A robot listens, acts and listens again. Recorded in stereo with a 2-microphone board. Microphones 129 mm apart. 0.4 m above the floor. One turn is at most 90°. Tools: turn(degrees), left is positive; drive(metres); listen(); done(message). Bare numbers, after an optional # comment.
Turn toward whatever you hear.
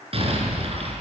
# The explosion: about 50° right or 130° right.
turn(-50)
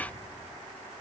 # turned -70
listen()
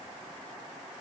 done("I heard an explosion, but can't make it out now. It was about 20° left or 60° right.")